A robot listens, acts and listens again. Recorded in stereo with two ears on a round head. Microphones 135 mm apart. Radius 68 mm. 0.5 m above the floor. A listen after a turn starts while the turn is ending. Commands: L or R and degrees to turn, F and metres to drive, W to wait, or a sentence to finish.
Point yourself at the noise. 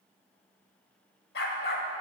L90
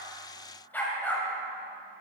L15
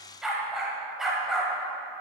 Found it: a dog barking, straight ahead.